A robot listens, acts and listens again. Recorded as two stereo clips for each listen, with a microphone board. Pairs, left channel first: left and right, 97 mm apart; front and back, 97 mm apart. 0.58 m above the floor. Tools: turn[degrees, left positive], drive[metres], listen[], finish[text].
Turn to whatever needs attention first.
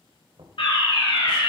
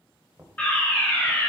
Thought: The fire alarm: 70° left.
Action: turn[70]
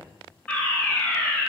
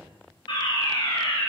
Thought: The fire alarm is now 10° left.
Action: turn[10]
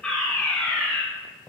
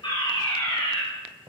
Action: finish[Facing the fire alarm, over 4 m away.]